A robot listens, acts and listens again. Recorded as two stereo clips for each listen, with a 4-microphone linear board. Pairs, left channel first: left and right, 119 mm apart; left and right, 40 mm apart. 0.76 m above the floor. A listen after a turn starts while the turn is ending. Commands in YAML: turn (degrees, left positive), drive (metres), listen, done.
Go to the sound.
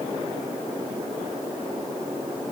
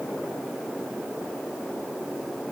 listen: true
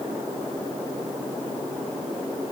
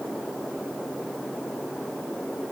listen: true
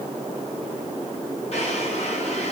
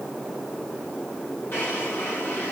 turn: 60
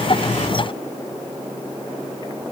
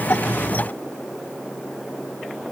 listen: true
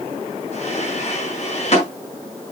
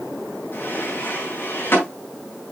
turn: 60
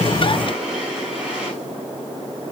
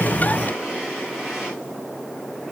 drive: 1.0
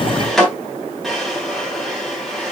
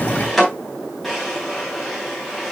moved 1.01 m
drive: 1.0
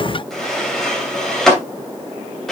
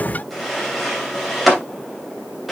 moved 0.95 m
drive: 1.0
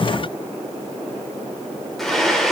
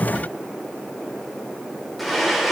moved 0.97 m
drive: 1.0
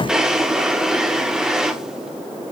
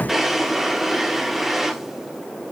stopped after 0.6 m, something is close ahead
done: "I am next to the drawer."